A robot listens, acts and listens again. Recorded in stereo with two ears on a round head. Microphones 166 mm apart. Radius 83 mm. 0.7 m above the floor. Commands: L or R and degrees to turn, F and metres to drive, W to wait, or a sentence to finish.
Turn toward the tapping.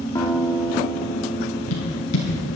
L90
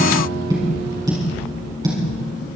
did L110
R20
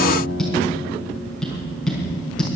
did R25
Facing the tapping.